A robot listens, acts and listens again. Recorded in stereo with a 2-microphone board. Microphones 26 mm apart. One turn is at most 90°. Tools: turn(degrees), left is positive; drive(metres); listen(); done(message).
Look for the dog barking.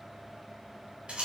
listen()
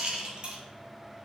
listen()
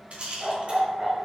turn(degrees=-25)
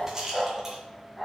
done("Found it: a dog barking, straight ahead, 2 to 4 m away.")